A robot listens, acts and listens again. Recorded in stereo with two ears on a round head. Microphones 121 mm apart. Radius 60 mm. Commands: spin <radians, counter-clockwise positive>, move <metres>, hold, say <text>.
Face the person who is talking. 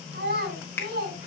spin -1.57
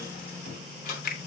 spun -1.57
hold
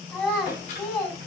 spin 0.17
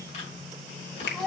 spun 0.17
say Facing the child speaking, over 4 m away.